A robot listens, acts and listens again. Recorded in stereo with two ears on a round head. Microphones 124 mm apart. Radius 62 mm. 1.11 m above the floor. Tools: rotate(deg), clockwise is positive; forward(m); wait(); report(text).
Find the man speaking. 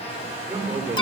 rotate(30)
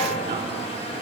wait()
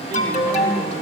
rotate(150)
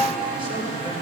rotate(45)
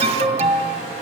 wait()
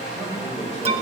report("Found it: a man speaking, straight ahead, over 4 m away.")